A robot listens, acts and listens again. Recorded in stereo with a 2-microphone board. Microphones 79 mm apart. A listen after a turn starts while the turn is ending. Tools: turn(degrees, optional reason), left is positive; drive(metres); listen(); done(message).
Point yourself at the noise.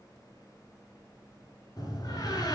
turn(degrees=50, reason="The door slam: about 50° left or 130° left.")
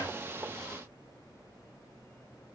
listen()
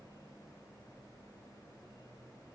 done("I heard a door slam, but can't make it out now. It was about straight ahead or 80° left.")